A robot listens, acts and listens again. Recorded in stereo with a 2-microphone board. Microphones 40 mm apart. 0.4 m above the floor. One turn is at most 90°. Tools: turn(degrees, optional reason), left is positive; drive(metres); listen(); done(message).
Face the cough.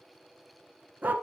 listen()
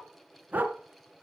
listen()
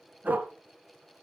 done("I can't make out a cough, only a dog barking.")